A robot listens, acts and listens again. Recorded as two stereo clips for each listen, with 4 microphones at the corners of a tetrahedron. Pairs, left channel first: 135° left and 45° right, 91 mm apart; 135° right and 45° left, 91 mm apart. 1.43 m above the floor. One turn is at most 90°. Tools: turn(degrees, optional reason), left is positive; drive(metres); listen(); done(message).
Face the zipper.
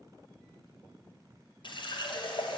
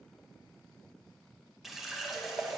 listen()
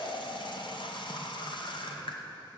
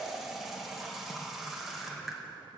listen()
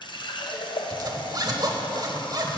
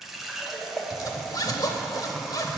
turn(degrees=-90, reason="The zipper: 90° right.")
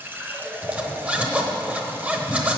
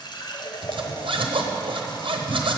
turn(degrees=25, reason="The zipper is now 25° left.")
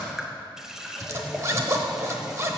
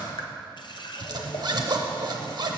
turn(degrees=10, reason="The zipper is now 10° left.")
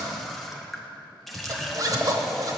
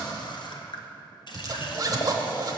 done("Facing the zipper.")